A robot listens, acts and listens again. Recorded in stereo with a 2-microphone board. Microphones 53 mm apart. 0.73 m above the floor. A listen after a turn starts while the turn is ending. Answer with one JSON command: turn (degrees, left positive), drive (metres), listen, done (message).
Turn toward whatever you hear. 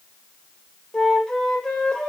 {"turn": 30}
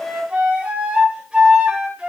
{"turn": -20}
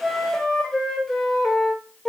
{"done": "Found it: a flute, straight ahead."}